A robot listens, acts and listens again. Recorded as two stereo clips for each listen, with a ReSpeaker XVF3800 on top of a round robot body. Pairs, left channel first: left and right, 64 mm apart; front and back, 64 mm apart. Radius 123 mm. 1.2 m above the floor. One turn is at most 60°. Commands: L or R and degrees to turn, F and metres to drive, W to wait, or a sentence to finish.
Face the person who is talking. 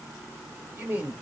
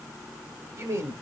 R60
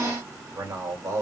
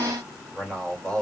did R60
R60
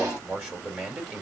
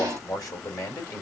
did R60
R20
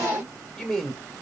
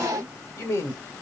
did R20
Found it: a man speaking, straight ahead, 2 to 4 m away.